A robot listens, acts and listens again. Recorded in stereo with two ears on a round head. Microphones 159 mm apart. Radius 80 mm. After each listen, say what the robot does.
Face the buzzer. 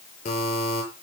Turn 45° left.
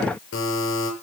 Turn 90° left.
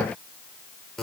Found it: a buzzer, straight ahead.